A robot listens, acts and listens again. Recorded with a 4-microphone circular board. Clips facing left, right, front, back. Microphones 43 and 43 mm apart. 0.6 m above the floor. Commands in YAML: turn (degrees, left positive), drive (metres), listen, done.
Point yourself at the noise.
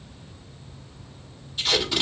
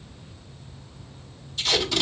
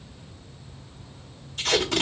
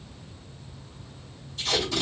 turn: 15
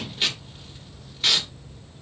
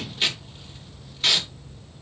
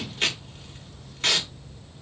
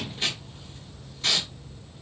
done: "Facing the tape being pulled, 1 to 2 m away."